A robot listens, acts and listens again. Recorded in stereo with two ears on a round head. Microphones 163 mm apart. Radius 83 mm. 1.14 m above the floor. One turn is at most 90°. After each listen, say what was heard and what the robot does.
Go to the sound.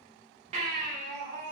The baby crying: about 40° right or 140° right. Turn 40° right.
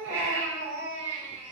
So it is at 105° right. Turn 90° right.
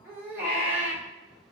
The baby crying is now 15° right. Turn 15° right.
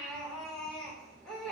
Drive 1.0 m forward.
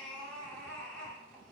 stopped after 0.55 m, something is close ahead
Something is in my way. I am facing the baby crying but have not reached it.